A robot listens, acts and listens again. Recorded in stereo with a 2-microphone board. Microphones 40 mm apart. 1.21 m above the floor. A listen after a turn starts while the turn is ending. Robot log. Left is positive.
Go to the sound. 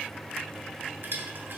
note: The crushing: about 60° right or 120° right.
cmd yaw -60
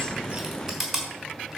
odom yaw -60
cmd fwd 1.0
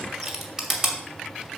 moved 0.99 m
cmd fwd 1.0
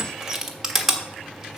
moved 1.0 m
note: The crushing is now 10° right.
cmd yaw -10
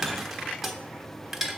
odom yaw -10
cmd fwd 1.0
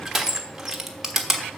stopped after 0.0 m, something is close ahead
note: The crushing is now 10° right.
cmd yaw -10
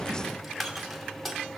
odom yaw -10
end: I am next to the crushing.